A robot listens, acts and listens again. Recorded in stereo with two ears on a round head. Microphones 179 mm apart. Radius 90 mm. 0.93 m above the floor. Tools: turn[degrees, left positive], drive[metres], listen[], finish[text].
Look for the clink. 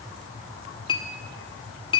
Thought: The clink: about 25° left or 155° left.
Action: turn[25]
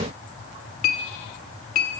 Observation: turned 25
Thought: So it is at 130° left.
Action: turn[130]
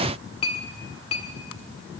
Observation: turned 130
Thought: The clink is now 25° left.
Action: turn[25]
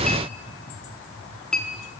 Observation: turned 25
Action: finish[Facing the clink.]